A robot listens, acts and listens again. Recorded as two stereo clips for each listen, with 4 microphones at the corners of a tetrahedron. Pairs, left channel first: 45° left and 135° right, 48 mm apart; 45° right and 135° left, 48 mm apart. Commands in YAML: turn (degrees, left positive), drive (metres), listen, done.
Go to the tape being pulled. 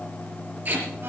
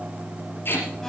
turn: -85
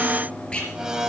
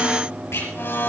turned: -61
turn: -25
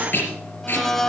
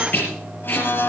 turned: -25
drive: 1.0
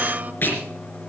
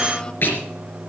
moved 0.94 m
drive: 1.0
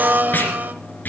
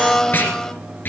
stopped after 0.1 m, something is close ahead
done: "Blocked. The tape being pulled is further on, straight ahead."